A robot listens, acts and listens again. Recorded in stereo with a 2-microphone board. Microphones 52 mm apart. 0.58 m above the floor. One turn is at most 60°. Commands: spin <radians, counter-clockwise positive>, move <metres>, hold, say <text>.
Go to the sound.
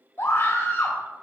spin 1.05
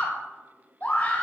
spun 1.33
spin 0.61
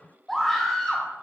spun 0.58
move 1.0
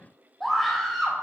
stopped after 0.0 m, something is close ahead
say Blocked. The scream is further on, straight ahead.